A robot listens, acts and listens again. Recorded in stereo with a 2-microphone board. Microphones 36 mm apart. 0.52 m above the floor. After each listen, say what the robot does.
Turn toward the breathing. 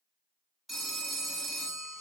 Keep listening.
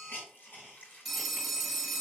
Keep listening.
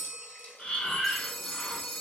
Turn 30° left.
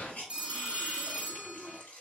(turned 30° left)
Turn 115° left.
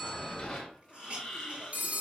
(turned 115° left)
Turn 15° left.
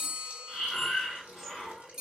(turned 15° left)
Found it: breathing, straight ahead, under 1 m away.